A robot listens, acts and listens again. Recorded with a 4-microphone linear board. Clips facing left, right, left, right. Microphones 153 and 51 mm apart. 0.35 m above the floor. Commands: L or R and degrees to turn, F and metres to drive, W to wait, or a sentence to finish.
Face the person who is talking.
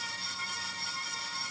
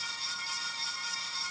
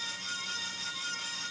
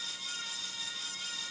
W
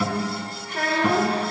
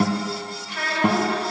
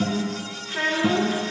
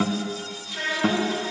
L45
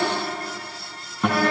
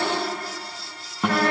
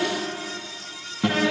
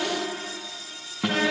Facing the child speaking, 2 to 4 m away.